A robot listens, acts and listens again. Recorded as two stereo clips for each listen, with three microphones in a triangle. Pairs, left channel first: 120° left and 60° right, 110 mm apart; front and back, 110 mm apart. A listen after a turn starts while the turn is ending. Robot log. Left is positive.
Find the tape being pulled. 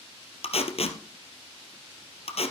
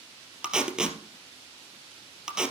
note: The tape being pulled: 95° left.
cmd yaw +95
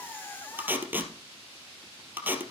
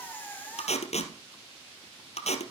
note: The tape being pulled is now 15° left.
cmd yaw +15
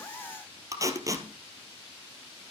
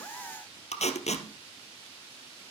end: Found it: tape being pulled, straight ahead.